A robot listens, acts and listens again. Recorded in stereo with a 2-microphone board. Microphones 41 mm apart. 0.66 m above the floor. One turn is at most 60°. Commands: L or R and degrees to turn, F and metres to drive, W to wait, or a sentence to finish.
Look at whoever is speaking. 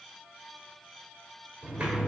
W
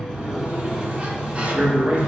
R30
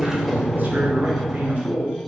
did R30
R60
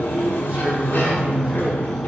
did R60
R60
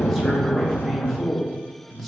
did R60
Found it: a man speaking, straight ahead, 1 to 2 m away.